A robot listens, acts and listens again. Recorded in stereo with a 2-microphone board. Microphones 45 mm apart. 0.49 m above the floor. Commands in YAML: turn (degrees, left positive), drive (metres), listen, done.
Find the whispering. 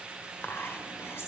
turn: 60
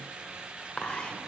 turn: 25
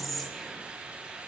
done: "Facing the whispering."